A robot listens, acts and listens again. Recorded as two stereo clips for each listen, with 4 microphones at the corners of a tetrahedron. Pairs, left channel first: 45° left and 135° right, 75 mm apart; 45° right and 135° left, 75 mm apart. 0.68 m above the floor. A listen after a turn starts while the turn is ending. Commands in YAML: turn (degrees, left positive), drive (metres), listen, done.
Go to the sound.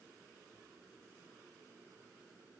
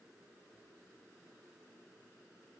listen: true
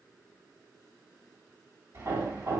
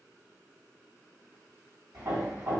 turn: 180
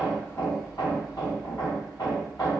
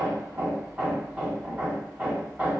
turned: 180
turn: 65
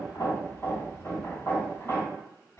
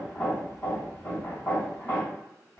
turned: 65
drive: 1.0
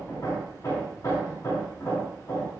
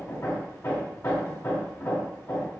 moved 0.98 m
drive: 1.0
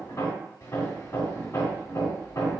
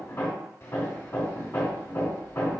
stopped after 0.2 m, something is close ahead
done: "I am next to the hammering."